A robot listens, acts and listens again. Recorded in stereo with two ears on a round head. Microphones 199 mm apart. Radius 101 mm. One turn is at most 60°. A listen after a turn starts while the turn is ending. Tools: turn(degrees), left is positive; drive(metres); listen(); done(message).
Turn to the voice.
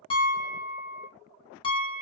listen()
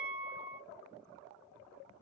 listen()
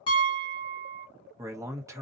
turn(degrees=-30)
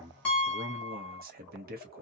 turn(degrees=-60)
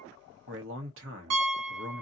turn(degrees=-60)
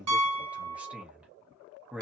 done("Found it: a man speaking, straight ahead.")